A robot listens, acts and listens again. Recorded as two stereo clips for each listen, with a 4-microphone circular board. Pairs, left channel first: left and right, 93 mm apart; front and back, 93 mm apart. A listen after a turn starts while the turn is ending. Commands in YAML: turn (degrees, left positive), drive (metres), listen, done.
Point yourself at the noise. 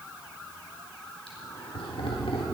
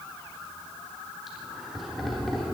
turn: 85
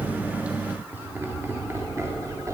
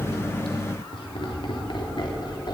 turn: -35
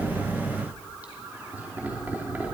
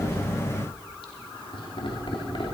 turn: -20
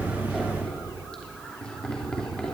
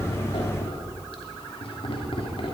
turn: 10
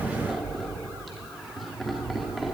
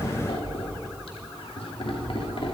done: "Facing the laughter."